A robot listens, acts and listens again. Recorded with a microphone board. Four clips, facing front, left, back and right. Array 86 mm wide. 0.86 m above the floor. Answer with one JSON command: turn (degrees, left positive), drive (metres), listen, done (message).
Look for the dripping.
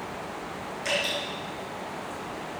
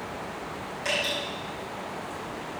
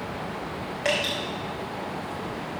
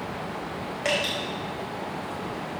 {"turn": -140}
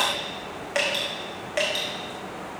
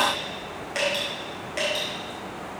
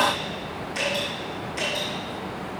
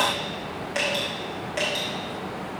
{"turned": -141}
{"done": "Found it: dripping, straight ahead."}